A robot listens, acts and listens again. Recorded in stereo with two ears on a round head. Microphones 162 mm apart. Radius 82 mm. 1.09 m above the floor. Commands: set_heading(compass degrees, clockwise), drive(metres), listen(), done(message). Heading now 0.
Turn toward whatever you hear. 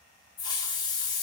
set_heading(340)
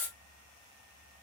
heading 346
set_heading(336)
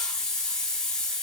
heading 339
done("Found it: a hiss, straight ahead.")